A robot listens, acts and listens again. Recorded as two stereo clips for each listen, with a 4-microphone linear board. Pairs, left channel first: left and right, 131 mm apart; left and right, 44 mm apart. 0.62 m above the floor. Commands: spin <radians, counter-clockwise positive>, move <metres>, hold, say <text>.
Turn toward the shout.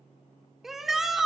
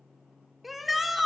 spin -0.52
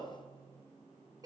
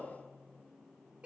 hold
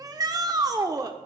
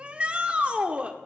spin -2.53
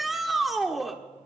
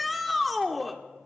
say Facing the shout.